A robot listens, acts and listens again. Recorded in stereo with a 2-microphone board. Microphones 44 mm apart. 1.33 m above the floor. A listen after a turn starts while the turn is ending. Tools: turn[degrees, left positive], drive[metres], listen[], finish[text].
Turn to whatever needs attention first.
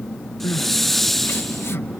Thought: The crying: about 65° left or 115° left.
Action: turn[65]
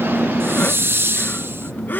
Action: listen[]
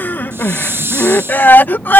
Thought: So it is at 45° left.
Action: turn[45]
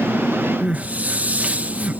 Thought: The crying is now 35° right.
Action: turn[-35]
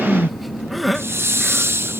Action: finish[Found it: crying, straight ahead.]